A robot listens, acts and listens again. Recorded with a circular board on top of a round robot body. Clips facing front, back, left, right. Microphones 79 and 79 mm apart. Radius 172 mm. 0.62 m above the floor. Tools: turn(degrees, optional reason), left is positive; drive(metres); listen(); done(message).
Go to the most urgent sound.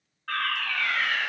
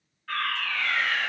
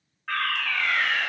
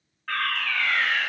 drive(metres=1.0)
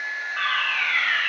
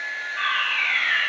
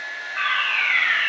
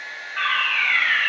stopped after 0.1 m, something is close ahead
done("Something is in my way. I am facing the fire alarm but have not reached it.")